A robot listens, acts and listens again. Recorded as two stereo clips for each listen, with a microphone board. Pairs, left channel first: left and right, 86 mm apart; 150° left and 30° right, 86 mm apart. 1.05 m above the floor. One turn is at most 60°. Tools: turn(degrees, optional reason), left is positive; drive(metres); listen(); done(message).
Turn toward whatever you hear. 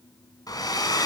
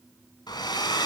turn(degrees=60, reason="The hair dryer: 120° left.")
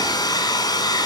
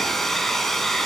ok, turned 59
turn(degrees=60, reason="The hair dryer is now 60° left.")
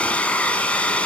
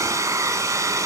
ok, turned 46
turn(degrees=15, reason="The hair dryer is now 15° left.")
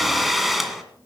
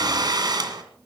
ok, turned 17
done("Found it: a hair dryer, straight ahead.")